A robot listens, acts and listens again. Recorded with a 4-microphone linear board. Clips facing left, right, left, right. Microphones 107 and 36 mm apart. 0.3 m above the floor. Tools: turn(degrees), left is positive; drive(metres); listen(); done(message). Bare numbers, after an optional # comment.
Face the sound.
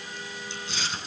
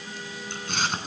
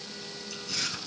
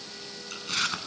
# The chewing: about 50° right or 130° right.
turn(-50)
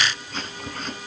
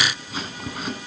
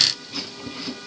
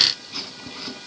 # So it is at 10° right.
turn(-10)
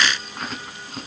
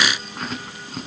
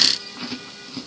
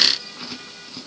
done("Facing the chewing, 2 to 4 m away.")